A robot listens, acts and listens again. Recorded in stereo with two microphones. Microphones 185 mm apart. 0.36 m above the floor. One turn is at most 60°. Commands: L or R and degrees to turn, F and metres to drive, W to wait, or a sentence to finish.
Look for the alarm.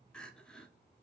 W
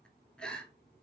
W
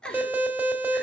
R30
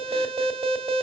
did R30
R60
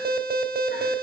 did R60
R60
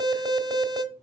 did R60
R30
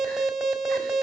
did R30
Facing the alarm.